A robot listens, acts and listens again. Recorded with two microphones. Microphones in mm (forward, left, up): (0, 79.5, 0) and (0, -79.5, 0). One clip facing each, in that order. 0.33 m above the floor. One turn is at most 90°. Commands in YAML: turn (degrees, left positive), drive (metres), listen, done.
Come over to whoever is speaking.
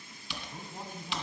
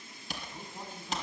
turn: 15
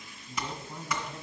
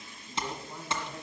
drive: 1.0
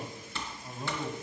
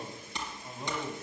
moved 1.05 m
drive: 1.0
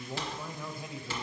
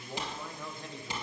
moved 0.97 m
turn: 10
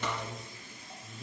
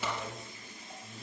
drive: 1.0
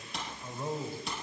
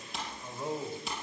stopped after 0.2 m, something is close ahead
done: "Arrived at the man speaking, straight ahead."